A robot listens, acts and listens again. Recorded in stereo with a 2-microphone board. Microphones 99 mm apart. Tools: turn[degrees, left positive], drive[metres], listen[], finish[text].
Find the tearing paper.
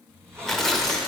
Action: turn[30]
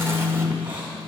Action: listen[]
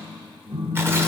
Action: listen[]
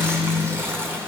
Thought: So it is at 25° right.
Action: turn[-25]
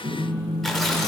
Action: finish[Found it: tearing paper, straight ahead.]